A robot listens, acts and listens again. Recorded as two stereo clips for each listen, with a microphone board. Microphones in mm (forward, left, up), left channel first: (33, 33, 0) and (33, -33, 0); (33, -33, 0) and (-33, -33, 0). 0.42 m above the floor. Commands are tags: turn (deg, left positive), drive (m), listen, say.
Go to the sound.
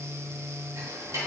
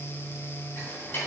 <turn deg="-60"/>
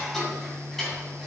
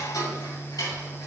<drive m="1.0"/>
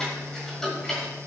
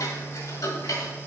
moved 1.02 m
<turn deg="10"/>
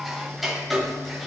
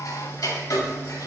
<drive m="1.0"/>
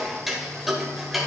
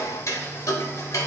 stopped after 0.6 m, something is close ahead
<say>I am next to the ticking.</say>